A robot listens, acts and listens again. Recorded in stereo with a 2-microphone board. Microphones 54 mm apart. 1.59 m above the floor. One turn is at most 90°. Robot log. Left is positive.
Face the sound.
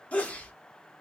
note: The sneeze: about 25° left or 155° left.
cmd yaw +25
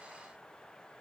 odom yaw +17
cmd idle
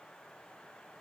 end: I heard a sneeze, but can't make it out now. It was about 10° left or 135° left.